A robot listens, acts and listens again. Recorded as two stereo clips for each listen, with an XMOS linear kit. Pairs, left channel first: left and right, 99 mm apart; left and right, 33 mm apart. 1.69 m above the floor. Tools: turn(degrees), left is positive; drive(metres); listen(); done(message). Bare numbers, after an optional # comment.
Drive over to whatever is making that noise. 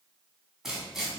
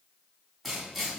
turn(-30)
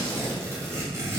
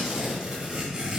# So it is at 150° right.
turn(-150)
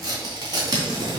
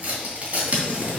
# The tearing paper is now 50° right.
turn(-50)
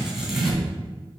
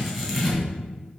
drive(1.0)
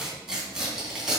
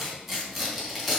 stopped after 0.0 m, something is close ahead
# The tearing paper is now 10° right.
turn(-10)
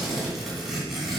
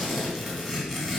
done("Blocked. The tearing paper is further on, straight ahead.")